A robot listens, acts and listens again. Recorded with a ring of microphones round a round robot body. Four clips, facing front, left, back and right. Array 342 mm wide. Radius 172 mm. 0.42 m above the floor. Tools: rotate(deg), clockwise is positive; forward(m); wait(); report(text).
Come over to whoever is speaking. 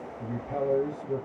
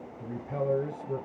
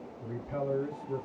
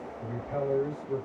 rotate(-35)
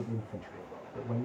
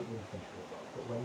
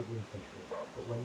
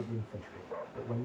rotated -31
forward(1.0)
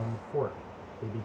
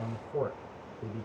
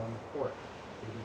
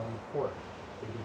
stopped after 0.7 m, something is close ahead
rotate(-10)
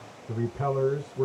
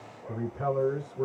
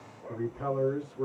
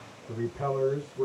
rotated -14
report("I am next to the man speaking.")